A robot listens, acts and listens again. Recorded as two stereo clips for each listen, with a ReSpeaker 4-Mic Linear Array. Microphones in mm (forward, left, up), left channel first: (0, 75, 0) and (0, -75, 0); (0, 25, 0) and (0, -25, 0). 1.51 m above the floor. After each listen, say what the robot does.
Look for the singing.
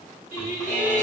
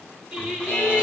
Turn 30° right.
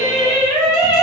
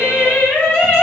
Turn 35° left.
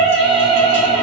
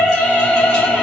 Turn 15° left.
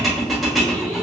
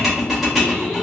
Keep listening.
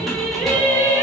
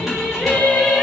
Turn 15° left.
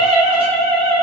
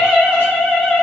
Found it: singing, straight ahead, 2 to 4 m away.